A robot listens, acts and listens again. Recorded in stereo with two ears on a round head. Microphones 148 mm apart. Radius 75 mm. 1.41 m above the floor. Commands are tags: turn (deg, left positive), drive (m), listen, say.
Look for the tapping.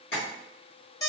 <turn deg="65"/>
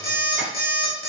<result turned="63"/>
<listen/>
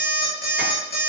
<listen/>
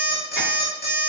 <say>I heard tapping, but can't make it out now. It was about straight ahead or 55° left.</say>